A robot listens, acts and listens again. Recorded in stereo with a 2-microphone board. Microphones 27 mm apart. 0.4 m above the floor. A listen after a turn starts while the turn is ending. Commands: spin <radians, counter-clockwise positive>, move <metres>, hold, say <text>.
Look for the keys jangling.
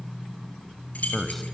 spin 1.13
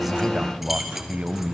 hold
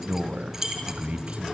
spin -0.26
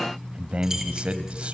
hold
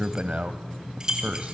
spin -0.44
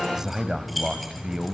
hold
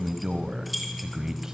say Facing the keys jangling, over 4 m away.